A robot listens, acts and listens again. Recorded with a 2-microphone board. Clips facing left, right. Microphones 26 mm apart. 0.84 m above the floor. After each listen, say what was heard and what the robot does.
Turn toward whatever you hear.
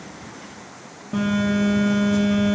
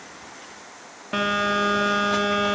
The phone buzzing: about 75° right or 105° right. Turn 75° right.
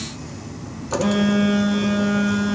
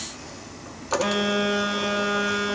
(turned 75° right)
So it is at 15° right. Turn 15° right.
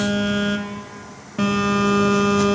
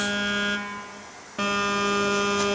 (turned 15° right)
Facing the phone buzzing, 1 to 2 m away.